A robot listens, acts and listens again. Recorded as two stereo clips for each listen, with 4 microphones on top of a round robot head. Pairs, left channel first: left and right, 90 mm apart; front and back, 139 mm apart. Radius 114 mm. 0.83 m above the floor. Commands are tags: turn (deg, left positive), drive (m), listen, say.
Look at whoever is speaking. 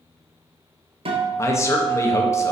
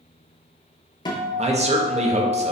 <turn deg="145"/>
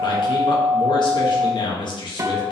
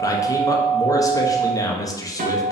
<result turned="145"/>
<turn deg="65"/>
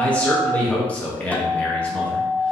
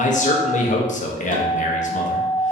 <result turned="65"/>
<turn deg="15"/>
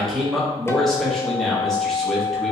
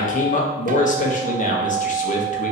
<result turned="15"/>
<say>Facing the man speaking.</say>